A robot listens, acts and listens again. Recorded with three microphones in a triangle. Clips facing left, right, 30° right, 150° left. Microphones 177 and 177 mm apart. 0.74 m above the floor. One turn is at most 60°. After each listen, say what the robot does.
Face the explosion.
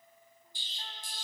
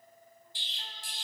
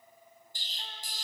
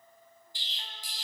Turn 60° right.
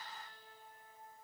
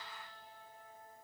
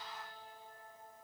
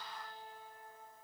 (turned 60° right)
Turn 15° right.
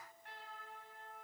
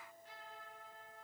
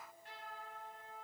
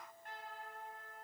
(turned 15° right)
I heard an explosion from this way, but can't make it out now.